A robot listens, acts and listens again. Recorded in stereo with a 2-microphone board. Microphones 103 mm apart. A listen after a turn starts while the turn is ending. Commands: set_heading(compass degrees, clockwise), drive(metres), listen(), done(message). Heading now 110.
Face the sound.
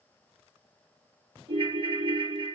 set_heading(165)
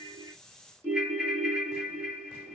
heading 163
set_heading(173)
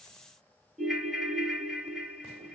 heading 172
done("Found it: a ringtone, straight ahead, 1 to 2 m away.")